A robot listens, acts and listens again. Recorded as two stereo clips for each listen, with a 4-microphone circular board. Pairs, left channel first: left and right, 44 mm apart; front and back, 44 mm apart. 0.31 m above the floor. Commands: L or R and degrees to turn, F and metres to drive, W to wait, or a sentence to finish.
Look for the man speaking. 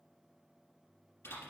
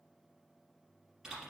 W
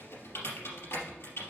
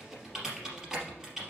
W
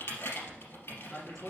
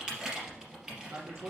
L175
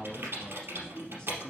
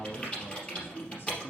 L20
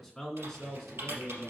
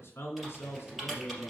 Facing the man speaking.